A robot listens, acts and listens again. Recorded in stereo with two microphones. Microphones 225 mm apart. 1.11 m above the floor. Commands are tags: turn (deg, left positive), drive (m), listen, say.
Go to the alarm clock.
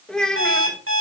<turn deg="-90"/>
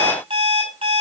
<turn deg="-20"/>
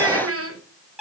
<drive m="1.0"/>
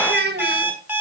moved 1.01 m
<drive m="1.0"/>
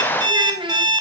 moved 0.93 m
<turn deg="-15"/>
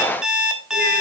<drive m="1.0"/>
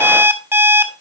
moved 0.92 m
<turn deg="-10"/>
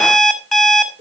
<drive m="1.0"/>
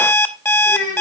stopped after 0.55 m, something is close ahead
<turn deg="10"/>
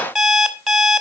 <say>Arrived at the alarm clock, straight ahead.</say>